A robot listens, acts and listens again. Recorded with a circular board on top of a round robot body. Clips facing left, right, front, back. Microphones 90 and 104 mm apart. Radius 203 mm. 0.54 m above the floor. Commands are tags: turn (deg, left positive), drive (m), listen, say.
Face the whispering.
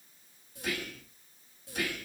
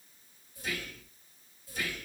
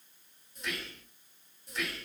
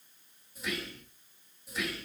<turn deg="95"/>
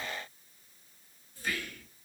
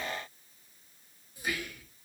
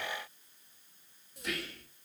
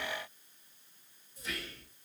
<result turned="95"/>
<turn deg="-15"/>
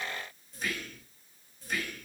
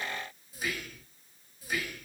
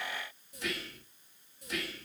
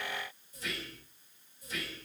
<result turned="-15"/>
<say>Found it: whispering, straight ahead.</say>